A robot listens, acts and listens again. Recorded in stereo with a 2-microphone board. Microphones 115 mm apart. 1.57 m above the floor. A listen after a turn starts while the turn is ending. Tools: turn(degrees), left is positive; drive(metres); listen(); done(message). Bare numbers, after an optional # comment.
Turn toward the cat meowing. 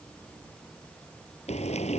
listen()
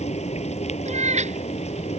turn(-90)
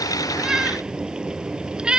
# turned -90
done("Found it: a cat meowing, straight ahead.")